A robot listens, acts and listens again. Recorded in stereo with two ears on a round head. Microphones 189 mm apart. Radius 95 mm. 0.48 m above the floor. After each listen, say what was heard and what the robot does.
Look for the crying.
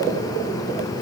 Keep listening.
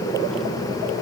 Keep listening.
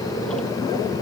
I can't make out crying to turn to.